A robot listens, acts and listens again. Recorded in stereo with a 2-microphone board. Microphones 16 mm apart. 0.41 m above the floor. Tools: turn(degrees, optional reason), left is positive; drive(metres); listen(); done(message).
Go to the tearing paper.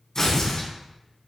turn(degrees=35, reason="The tearing paper: about 35° left or 145° left.")
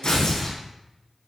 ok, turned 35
turn(degrees=110, reason="So it is at 110° left.")
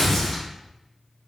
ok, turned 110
turn(degrees=20, reason="The tearing paper is now 20° left.")
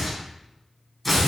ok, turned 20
drive(metres=1.0)
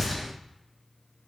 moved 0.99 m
drive(metres=1.0)
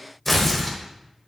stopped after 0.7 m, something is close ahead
turn(degrees=15, reason="The tearing paper is now 15° left.")
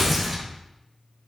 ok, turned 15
done("I am next to the tearing paper.")